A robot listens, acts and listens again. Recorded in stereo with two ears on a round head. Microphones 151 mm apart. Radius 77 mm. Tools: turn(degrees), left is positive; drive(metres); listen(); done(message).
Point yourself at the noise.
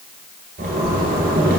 turn(degrees=-60)
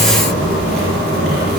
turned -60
turn(degrees=-60)
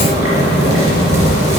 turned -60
turn(degrees=-20)
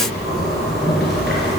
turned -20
done("Found it: a zipper, straight ahead, 2 to 4 m away.")